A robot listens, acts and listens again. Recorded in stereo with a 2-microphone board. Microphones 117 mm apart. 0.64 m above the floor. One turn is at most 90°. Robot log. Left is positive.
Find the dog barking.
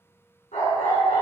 cmd yaw +90
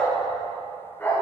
note: So it is at 20° left.
cmd yaw +20
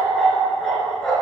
end: Found it: a dog barking, straight ahead, over 4 m away.